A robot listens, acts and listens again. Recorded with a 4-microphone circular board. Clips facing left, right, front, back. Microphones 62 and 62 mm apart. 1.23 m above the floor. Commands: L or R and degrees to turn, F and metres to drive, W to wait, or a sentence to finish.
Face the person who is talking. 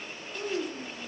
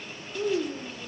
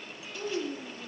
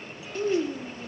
L170
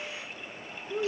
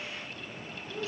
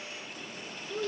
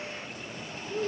L45
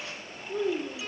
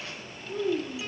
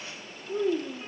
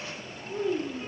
R15
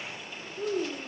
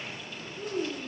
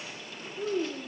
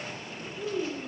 Facing the child speaking.